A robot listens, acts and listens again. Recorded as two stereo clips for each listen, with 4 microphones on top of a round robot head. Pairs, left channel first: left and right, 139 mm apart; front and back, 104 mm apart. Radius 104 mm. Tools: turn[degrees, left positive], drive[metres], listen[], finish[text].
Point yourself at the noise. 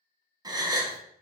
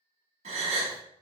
Thought: The gasp: 150° right.
Action: turn[-150]
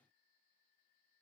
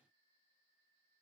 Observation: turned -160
Thought: Nothing new. It was at 10° left.
Action: turn[10]
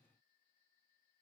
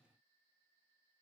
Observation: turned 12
Action: finish[I heard a gasp from this way, but can't make it out now.]